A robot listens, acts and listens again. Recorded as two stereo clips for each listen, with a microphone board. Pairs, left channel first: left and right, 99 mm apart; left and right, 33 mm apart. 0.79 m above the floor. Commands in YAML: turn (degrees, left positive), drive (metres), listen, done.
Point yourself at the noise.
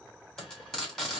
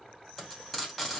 turn: 30
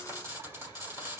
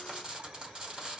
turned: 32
turn: -25
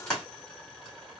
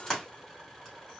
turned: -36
turn: 10
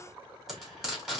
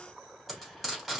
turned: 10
done: "Facing the frying."